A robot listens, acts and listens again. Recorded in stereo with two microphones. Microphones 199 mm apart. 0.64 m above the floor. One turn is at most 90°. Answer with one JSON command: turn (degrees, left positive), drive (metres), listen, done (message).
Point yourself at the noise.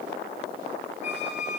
{"turn": -60}
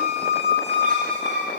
{"turn": -60}
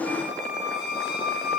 {"done": "Facing the squeak."}